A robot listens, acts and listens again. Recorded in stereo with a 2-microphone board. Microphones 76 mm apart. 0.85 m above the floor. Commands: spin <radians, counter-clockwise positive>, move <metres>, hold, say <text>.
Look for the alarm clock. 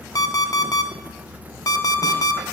spin 0.87
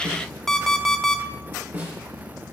say Facing the alarm clock.